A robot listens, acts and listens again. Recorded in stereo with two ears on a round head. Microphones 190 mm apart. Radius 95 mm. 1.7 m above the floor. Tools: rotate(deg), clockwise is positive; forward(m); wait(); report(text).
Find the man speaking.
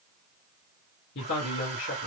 rotate(-60)
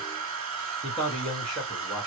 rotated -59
report("Facing the man speaking.")